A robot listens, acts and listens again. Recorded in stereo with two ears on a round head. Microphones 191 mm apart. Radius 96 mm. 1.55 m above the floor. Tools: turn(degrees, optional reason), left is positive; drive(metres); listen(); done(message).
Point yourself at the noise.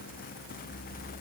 listen()
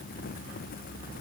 listen()
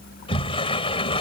turn(degrees=25, reason="The sliding door: about 25° left or 155° left.")
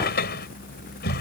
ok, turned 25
turn(degrees=130, reason="So it is at 130° left.")
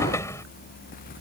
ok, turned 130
turn(degrees=15, reason="The sliding door is now 15° left.")
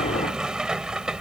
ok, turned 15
done("Facing the sliding door.")